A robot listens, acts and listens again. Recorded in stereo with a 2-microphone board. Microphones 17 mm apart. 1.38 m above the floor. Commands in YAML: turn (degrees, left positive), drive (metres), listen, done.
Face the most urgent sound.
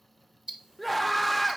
turn: 30
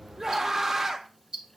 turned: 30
turn: -20
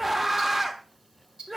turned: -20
turn: -10
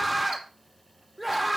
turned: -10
done: "Facing the scream, under 1 m away."